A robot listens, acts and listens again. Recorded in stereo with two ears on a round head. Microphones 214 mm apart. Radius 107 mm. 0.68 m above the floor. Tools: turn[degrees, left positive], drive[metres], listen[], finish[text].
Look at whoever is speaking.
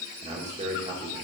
Thought: The man speaking: about 30° right or 150° right.
Action: turn[-30]
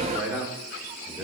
Action: finish[Found it: a man speaking, straight ahead.]